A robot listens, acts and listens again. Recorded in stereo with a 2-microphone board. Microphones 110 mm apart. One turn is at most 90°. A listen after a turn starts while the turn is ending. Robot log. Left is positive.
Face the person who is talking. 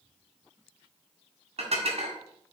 cmd idle
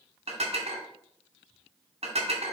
cmd idle
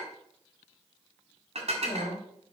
note: The woman speaking: about 40° left or 140° left.
cmd yaw +40
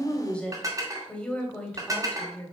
note: So it is at 10° left.
cmd yaw +10
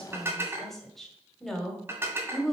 end: Facing the woman speaking, 1 to 2 m away.